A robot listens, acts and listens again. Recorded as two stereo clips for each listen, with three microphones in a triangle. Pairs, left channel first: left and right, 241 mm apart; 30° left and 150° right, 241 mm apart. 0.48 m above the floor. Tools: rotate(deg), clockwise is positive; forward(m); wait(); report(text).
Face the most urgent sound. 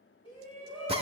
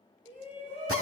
rotate(-155)
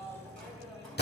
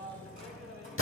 report("Found it: a shout, straight ahead.")